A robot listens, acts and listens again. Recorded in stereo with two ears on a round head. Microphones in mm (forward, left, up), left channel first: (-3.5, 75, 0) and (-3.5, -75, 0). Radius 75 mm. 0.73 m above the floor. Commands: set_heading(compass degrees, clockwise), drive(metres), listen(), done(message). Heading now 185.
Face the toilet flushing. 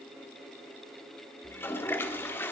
set_heading(155)
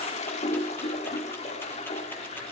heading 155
set_heading(20)
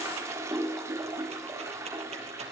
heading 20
set_heading(40)
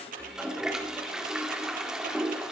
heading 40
done("Found it: a toilet flushing, straight ahead.")